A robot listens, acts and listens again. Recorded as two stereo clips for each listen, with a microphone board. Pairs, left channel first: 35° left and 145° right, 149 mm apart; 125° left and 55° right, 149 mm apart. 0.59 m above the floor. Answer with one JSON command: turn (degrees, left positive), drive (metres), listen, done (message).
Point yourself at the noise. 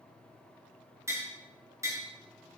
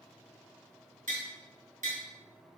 {"turn": -75}
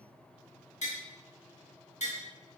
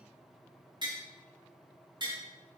{"done": "Found it: tapping, straight ahead."}